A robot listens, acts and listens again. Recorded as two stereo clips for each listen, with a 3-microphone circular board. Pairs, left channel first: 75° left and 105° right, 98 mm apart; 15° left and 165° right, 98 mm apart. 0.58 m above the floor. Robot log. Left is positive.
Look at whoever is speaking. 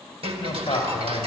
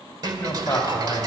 note: The man speaking: 80° left.
cmd yaw +80
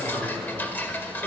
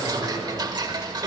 note: The man speaking is now 20° right.
cmd yaw -20
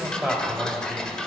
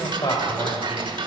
note: The man speaking is now 10° right.
cmd yaw -10
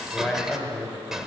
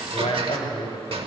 end: Facing the man speaking, 2 to 4 m away.